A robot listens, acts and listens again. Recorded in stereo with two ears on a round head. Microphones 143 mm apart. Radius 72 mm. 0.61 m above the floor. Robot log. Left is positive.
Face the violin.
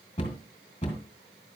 cmd idle
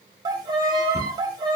note: The violin: about 25° right or 155° right.
cmd yaw -25
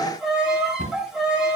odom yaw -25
end: Found it: a violin, straight ahead, 1 to 2 m away.